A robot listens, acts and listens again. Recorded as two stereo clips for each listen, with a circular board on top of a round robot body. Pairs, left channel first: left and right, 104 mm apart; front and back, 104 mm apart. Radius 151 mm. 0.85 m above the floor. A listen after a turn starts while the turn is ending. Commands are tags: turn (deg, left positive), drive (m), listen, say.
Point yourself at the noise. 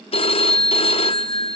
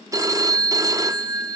<turn deg="120"/>
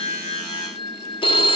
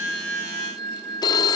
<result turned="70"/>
<turn deg="50"/>
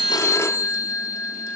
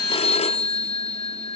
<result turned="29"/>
<turn deg="25"/>
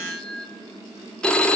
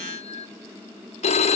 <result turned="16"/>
<turn deg="10"/>
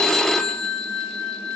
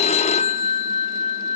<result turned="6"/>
<say>Facing the phone ringing.</say>